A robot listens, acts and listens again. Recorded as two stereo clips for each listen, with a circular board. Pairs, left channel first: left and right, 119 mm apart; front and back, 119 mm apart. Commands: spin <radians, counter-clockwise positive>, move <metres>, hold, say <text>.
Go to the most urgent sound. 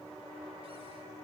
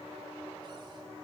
hold
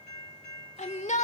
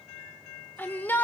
spin 1.31
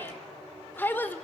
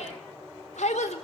spin 0.26
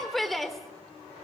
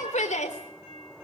move 1.0
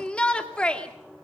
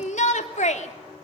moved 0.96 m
spin 0.17
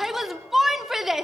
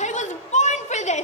move 1.0
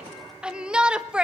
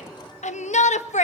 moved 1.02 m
spin -0.17
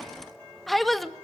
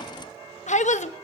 move 1.0
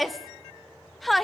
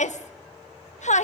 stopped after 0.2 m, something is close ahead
say I am next to the shout.